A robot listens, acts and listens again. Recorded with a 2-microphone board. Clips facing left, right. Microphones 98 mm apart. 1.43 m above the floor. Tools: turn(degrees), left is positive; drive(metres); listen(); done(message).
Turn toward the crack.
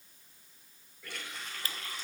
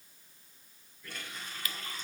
turn(degrees=35)
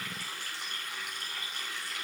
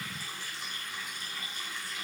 listen()
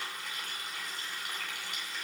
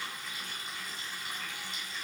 done("I heard a crack, but can't make it out now. It was about straight ahead or 110° left.")